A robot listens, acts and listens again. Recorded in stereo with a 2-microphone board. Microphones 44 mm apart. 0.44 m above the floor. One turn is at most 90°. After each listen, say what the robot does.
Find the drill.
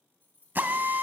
Turn 55° right.
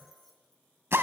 Turn 70° right.
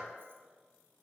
Keep listening.
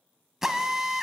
Turn 10° right.
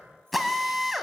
Facing the drill, 1 to 2 m away.